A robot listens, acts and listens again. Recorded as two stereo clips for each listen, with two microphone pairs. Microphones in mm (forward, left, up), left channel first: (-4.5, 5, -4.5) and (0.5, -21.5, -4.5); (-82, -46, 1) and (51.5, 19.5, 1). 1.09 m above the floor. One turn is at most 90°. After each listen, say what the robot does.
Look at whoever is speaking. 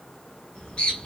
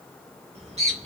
Keep listening.
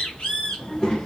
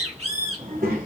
Turn 40° left.
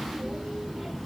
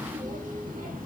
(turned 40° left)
Turn 15° left.
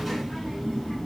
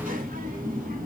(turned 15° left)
Turn 25° left.
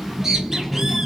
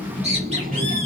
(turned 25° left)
Turn 25° left.
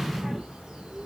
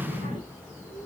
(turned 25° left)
Found it: a child speaking, straight ahead, 1 to 2 m away.